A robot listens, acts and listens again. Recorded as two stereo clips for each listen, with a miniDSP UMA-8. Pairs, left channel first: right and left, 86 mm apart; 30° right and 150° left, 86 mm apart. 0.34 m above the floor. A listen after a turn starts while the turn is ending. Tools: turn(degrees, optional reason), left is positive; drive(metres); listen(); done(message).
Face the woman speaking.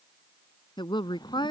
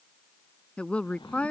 turn(degrees=-105, reason="The woman speaking: 105° right.")
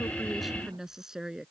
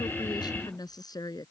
turn(degrees=10, reason="The woman speaking is now 10° left.")
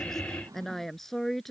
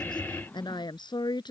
done("Facing the woman speaking.")